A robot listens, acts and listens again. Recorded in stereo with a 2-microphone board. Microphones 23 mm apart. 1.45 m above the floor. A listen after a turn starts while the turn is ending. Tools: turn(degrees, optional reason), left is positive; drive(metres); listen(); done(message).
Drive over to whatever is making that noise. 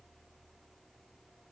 listen()
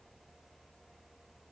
listen()
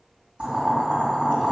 turn(degrees=-75, reason="The boiling: about 75° right or 105° right.")
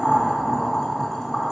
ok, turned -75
drive(metres=1.0)
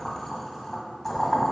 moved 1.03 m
drive(metres=1.0)
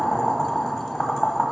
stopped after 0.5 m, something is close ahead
done("I am next to the boiling.")